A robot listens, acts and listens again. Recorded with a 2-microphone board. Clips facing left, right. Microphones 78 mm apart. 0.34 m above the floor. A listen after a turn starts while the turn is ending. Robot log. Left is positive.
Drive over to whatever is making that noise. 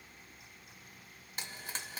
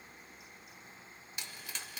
note: The frying: about 40° left or 140° left.
cmd yaw +40
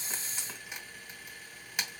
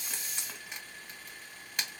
note: So it is at 10° left.
cmd yaw +10
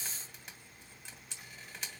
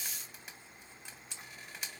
cmd fwd 1.0
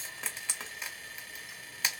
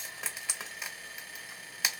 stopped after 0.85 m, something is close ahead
end: Arrived at the frying, straight ahead.